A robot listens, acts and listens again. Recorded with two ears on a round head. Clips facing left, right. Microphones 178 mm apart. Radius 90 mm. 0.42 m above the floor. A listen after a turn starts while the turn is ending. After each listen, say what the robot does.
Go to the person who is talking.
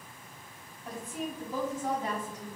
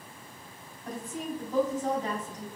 Turn 30° left.
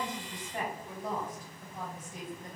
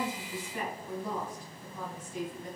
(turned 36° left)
Turn 135° left.
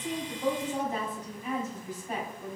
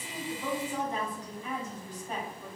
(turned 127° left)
Drive 1.0 m forward.
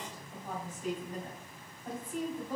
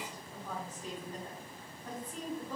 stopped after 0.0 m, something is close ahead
Turn 10° left.
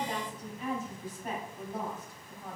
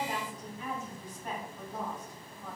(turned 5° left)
Something is in my way. I am facing the woman speaking but have not reached it.